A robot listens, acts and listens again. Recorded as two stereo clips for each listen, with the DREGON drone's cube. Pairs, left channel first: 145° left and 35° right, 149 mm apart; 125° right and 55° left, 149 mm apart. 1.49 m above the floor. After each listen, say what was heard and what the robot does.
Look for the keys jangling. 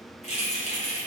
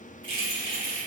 The keys jangling: 110° left. Turn 110° left.
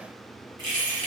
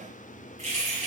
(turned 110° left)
The keys jangling is now 25° left. Turn 25° left.
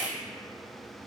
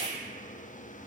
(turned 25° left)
Found it: keys jangling, straight ahead.